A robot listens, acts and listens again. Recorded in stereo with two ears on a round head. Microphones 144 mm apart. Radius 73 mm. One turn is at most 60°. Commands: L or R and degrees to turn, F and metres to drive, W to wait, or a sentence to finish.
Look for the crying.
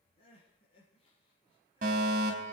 L35
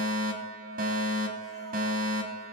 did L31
W
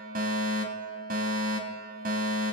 W
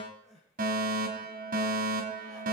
Facing the crying, over 4 m away.